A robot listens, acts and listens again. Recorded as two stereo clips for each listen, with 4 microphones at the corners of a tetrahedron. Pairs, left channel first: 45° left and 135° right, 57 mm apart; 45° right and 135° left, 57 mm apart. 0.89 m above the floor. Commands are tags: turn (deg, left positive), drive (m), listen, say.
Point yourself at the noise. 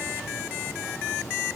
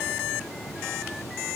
<listen/>
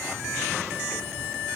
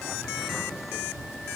<listen/>
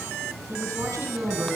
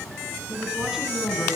<turn deg="-145"/>
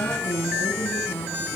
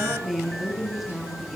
<turn deg="50"/>
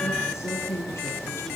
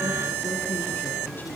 <listen/>
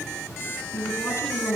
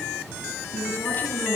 <turn deg="10"/>
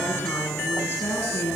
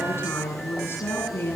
<say>Facing the woman speaking, over 4 m away.</say>